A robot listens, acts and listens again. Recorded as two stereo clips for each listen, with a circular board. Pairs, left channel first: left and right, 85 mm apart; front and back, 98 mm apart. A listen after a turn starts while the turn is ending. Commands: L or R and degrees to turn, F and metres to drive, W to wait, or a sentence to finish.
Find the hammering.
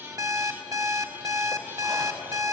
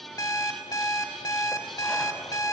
W
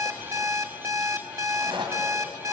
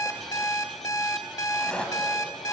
W
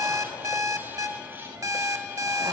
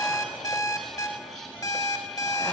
I can't make out hammering to turn to.